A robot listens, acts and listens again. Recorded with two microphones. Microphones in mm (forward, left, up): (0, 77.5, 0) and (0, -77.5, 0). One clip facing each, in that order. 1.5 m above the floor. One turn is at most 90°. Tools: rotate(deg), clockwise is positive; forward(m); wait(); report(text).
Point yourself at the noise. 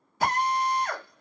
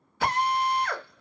rotate(-40)
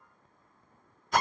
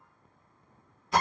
report("Facing the drill, 1 to 2 m away.")